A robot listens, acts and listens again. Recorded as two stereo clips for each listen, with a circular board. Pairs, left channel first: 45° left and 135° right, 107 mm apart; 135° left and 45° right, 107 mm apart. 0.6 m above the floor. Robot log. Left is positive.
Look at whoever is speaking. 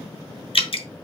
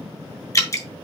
cmd idle
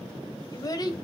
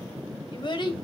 note: The child speaking: 90° left.
cmd yaw +90
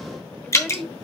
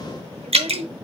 note: The child speaking is now 45° right.
cmd yaw -45
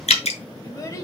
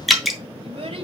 note: The child speaking is now 15° right.
cmd yaw -15
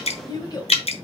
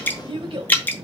note: The child speaking is now 10° right.
cmd yaw -10
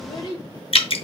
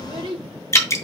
end: Found it: a child speaking, straight ahead, 1 to 2 m away.